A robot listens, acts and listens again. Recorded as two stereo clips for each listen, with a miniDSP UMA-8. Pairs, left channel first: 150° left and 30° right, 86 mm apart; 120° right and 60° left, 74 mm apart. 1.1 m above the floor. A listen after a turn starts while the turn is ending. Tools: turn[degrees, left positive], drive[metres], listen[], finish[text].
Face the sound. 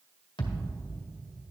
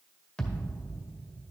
Thought: The thud: 165° left.
Action: turn[165]
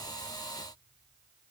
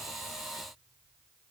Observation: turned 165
Action: finish[I heard a thud from this way, but can't make it out now.]